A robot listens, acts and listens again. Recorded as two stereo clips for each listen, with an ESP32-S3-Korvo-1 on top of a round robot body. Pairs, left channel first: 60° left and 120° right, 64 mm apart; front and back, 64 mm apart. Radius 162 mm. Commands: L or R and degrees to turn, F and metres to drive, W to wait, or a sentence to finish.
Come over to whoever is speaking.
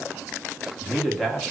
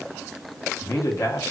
R30
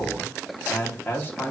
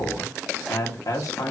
F1.0
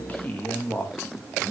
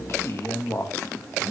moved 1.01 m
L10
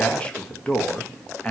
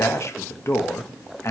F1.0
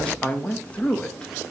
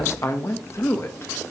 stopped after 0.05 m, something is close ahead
Arrived at the man speaking, straight ahead.